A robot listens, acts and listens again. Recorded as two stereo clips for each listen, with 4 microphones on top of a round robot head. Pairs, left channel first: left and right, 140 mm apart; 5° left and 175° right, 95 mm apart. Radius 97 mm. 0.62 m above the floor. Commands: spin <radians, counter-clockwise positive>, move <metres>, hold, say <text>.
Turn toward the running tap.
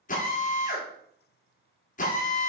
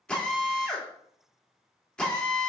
hold
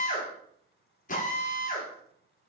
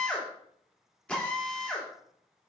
hold
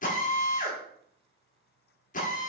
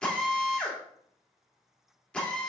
say I can't make out a running tap, only a drill.